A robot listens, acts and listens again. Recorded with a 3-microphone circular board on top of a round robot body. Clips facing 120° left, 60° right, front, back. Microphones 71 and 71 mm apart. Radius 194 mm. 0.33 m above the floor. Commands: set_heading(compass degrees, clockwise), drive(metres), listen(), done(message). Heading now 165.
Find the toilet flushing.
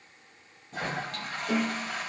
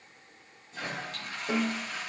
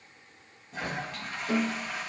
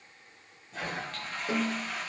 set_heading(80)
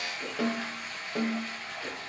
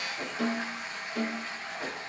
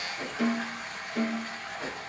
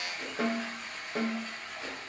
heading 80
done("Found it: a toilet flushing, straight ahead, 2 to 4 m away.")